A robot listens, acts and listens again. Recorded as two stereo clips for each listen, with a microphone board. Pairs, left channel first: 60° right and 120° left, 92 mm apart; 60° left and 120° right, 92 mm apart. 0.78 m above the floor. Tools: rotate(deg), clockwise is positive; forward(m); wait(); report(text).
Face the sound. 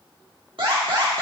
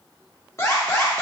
rotate(-115)
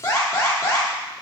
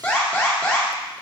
rotate(10)
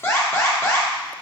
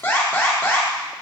report("Found it: an alarm, straight ahead, 1 to 2 m away.")